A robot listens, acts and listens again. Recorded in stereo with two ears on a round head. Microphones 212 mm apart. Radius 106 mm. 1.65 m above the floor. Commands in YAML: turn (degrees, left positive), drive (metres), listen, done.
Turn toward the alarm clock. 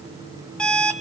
turn: 30
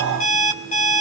turn: 145
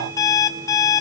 turn: 15
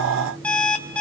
done: "Facing the alarm clock."